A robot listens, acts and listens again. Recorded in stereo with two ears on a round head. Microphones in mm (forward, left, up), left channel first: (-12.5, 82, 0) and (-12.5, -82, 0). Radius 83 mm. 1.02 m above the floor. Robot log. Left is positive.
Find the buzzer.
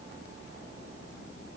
cmd idle
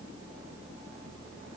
cmd idle
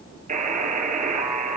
note: The buzzer: about 45° right or 135° right.
cmd yaw -45
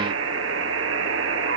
note: So it is at 90° right.
cmd yaw -90
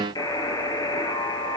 note: The buzzer is now 20° left.
cmd yaw +20
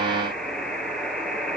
end: Found it: a buzzer, straight ahead, over 4 m away.